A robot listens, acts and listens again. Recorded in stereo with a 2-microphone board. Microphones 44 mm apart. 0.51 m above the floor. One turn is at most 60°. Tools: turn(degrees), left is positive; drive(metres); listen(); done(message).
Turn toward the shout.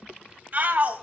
turn(degrees=-40)
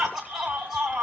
turn(degrees=-10)
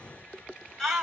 done("Found it: a shout, straight ahead, 2 to 4 m away.")